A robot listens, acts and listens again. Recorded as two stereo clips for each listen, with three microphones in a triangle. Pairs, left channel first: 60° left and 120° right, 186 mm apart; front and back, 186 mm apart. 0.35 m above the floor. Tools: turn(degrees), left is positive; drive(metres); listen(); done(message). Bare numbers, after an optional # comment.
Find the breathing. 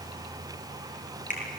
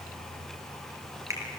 listen()
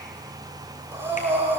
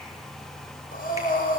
# The breathing: 40° right.
turn(-40)
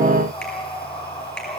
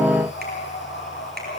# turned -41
done("Facing the breathing, over 4 m away.")